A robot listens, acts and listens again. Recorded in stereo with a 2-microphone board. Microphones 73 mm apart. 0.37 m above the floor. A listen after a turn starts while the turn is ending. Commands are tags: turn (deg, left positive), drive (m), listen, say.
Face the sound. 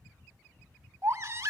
<turn deg="-45"/>
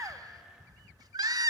<turn deg="-90"/>
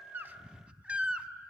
<turn deg="-15"/>
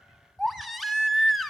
<say>Found it: a baby crying, straight ahead.</say>